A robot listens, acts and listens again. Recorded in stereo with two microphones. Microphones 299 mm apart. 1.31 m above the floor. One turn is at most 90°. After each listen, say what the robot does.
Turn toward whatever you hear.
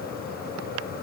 Keep listening.
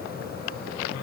Keep listening.
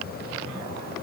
I can't make out anything to turn to.